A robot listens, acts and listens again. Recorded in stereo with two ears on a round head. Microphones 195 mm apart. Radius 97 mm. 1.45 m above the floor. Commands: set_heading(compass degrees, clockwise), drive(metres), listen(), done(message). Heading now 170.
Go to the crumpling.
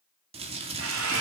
set_heading(200)
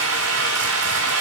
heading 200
listen()
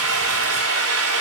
listen()
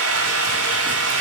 done("I heard crumpling, but can't make it out now. It was about straight ahead or 120° right. I did not reach it.")